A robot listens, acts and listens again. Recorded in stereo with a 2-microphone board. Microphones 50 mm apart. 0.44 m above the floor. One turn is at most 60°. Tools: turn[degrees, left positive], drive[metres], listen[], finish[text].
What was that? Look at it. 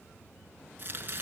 Thought: The chopping: about 40° right or 140° right.
Action: turn[-40]
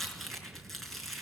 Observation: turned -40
Action: finish[Facing the chopping, over 4 m away.]